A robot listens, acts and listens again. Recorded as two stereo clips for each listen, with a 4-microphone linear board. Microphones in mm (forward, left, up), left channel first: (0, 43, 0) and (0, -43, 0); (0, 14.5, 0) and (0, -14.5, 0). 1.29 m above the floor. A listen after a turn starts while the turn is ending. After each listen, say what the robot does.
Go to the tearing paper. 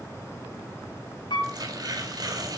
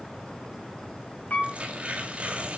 Turn 55° right.
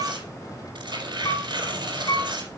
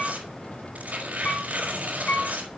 Turn 75° right.
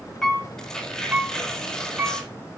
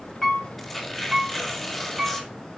Drive 1.0 m forward.
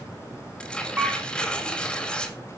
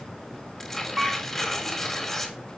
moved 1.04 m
Turn 10° left.
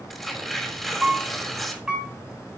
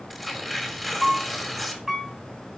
Drive 1.0 m forward.
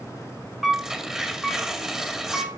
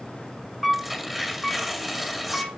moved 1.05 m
Drive 1.0 m forward.
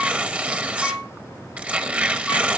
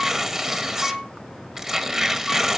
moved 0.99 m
Turn 20° right.
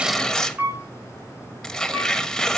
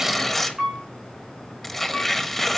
Drive 1.0 m forward.
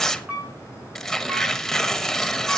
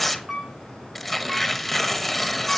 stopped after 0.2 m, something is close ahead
Arrived at the tearing paper, straight ahead.